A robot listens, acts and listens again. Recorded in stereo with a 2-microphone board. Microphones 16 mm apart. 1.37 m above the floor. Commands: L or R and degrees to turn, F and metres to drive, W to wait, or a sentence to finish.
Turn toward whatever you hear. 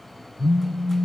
R65
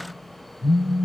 R45
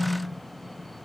W
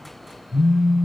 Facing the phone buzzing.